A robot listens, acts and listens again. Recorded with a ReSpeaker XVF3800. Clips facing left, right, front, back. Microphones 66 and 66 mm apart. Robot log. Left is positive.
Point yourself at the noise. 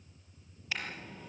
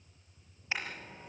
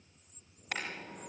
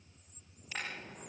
note: The car horn: 25° right.
cmd yaw -25
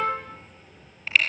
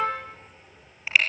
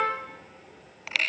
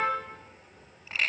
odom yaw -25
note: The car horn is now 10° right.
cmd yaw -10
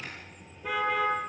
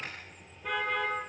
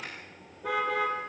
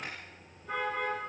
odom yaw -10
end: Facing the car horn, over 4 m away.